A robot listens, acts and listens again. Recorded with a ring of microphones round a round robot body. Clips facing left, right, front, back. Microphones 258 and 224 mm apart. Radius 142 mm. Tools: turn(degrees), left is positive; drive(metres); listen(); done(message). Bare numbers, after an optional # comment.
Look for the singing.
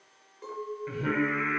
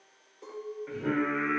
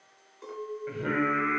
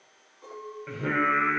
# The singing: 140° left.
turn(140)
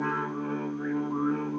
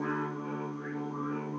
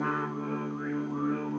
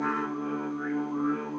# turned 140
# The singing is now 55° left.
turn(55)
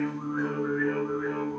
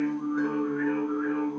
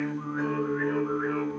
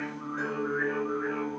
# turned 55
# The singing is now 25° left.
turn(25)
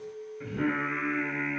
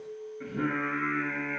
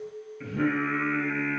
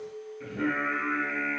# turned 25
done("Found it: singing, straight ahead, 2 to 4 m away.")